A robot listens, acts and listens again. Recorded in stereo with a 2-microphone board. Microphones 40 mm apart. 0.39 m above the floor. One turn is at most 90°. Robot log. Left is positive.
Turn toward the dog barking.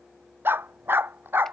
note: The dog barking: about 60° right or 120° right.
cmd yaw -60
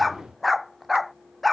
end: Facing the dog barking.